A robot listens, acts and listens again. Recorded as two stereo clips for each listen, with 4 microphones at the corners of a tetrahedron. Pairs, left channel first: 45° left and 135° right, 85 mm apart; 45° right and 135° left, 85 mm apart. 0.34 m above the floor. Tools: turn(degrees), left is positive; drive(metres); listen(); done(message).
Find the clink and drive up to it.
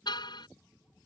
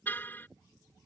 listen()
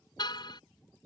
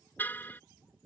listen()
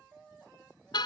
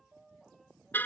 done("I can't make out a clink, only a car horn.")